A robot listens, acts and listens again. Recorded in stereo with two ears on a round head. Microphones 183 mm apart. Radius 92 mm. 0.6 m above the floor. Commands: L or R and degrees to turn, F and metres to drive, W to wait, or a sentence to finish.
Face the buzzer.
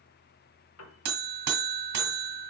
R50
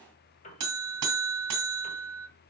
R80
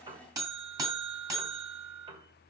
R15
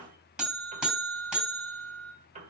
Found it: a buzzer, straight ahead.